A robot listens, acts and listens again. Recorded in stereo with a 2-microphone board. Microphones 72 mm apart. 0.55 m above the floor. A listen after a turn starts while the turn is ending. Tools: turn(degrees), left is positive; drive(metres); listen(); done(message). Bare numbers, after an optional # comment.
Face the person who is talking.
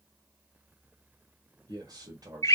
# The man speaking: about 65° right or 115° right.
turn(-65)
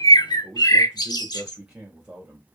# So it is at 15° right.
turn(-15)
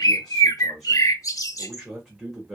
done("Facing the man speaking.")